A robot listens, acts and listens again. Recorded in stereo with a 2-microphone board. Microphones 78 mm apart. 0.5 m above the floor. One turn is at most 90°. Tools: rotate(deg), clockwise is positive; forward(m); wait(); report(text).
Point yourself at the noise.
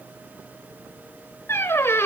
rotate(-35)
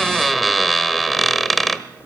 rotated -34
report("Found it: a squeak, straight ahead.")